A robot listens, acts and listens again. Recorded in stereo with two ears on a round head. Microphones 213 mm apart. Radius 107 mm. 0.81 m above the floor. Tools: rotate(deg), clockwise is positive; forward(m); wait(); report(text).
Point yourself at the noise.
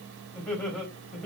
rotate(-30)
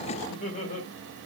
rotate(-150)
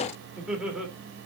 report("Facing the laughter, 2 to 4 m away.")